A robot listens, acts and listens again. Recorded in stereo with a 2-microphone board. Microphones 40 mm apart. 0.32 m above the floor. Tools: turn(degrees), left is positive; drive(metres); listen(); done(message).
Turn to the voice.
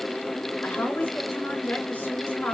turn(degrees=50)
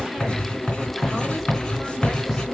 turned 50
listen()
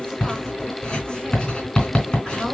listen()
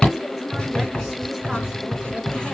done("I heard a woman speaking, but can't make it out now. It was about straight ahead or 80° left.")